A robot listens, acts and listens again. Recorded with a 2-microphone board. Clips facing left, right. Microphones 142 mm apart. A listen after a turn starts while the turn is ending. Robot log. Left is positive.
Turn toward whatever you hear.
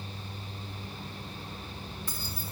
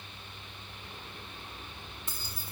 note: The keys jangling: about 20° right or 160° right.
cmd yaw -20
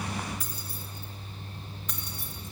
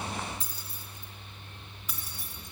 cmd yaw +30
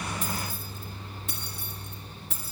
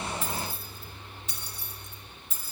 note: So it is at 115° left.
cmd yaw +115
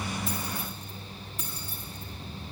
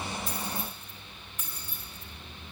note: The keys jangling is now 35° left.
cmd yaw +35
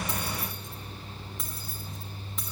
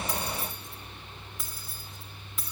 end: Facing the keys jangling.